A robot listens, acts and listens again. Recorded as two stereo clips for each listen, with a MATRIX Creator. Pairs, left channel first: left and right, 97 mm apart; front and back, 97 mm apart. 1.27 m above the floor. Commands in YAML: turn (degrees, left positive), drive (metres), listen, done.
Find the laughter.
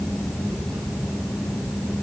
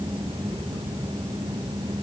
listen: true
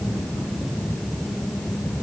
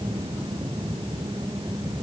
listen: true
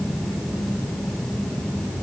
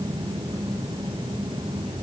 done: "I can't make out laughter."